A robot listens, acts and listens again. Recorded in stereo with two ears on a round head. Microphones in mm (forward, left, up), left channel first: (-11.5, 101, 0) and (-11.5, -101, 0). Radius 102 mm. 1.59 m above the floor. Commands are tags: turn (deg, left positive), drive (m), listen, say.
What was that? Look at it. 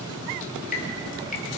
<turn deg="35"/>
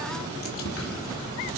<turn deg="110"/>
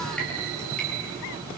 <say>Found it: dripping, straight ahead.</say>